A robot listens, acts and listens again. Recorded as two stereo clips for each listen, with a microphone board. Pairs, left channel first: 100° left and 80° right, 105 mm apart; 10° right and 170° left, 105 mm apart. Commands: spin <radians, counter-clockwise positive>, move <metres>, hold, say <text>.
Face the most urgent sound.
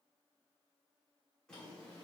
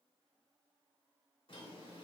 hold
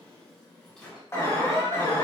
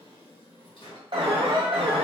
spin 2.62
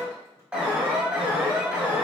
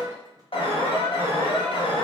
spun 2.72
say Found it: an alarm, straight ahead.